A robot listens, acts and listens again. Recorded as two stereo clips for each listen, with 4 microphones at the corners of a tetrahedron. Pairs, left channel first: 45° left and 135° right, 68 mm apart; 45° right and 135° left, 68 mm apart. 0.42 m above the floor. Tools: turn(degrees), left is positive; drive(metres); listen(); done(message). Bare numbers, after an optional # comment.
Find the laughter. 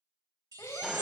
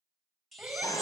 # The laughter: 65° left.
turn(65)
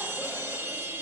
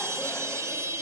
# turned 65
listen()
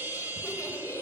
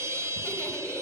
# The laughter is now 10° left.
turn(10)
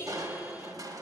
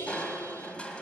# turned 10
done("Found it: laughter, straight ahead, 1 to 2 m away.")